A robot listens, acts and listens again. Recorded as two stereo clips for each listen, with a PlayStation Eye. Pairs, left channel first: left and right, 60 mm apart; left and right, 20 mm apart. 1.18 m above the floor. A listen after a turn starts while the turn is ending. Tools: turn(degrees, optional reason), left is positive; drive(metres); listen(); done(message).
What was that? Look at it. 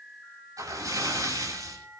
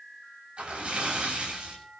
turn(degrees=-65, reason="The splash: about 65° right or 115° right.")
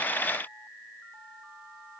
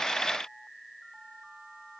listen()
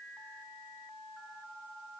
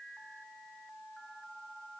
done("I heard a splash, but can't make it out now. It was about straight ahead or 50° right.")